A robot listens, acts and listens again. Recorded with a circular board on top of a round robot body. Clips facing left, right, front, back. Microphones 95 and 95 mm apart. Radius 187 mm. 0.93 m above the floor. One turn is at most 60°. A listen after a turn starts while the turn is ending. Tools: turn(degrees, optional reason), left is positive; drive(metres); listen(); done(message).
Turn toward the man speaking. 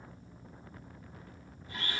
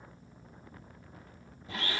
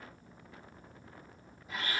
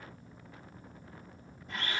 listen()
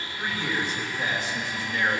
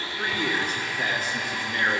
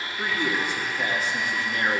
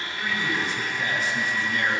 turn(degrees=-45, reason="The man speaking: 45° right.")
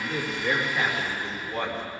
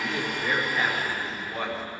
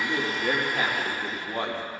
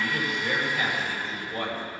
done("Found it: a man speaking, straight ahead.")